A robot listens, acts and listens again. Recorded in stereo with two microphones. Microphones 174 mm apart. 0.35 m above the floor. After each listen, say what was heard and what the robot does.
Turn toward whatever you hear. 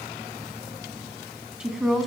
Turn 30° left.
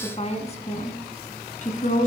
So it is at 130° left. Turn 130° left.
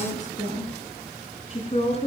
The woman speaking is now 35° left. Turn 35° left.
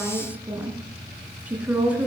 The woman speaking is now 10° right. Turn 10° right.
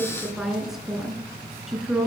Facing the woman speaking, 2 to 4 m away.